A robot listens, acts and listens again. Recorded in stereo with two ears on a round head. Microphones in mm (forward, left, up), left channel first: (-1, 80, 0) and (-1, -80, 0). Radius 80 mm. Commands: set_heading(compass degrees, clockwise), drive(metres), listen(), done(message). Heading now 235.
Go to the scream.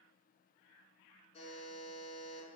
listen()
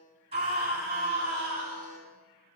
set_heading(270)
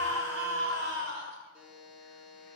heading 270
set_heading(20)
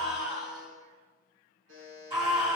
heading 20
set_heading(45)
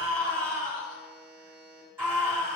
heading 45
set_heading(60)
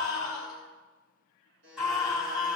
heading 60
drive(1.0)
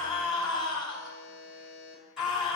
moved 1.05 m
drive(1.0)
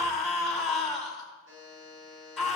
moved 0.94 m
drive(1.0)
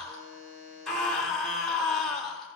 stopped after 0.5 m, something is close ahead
done("I am next to the scream.")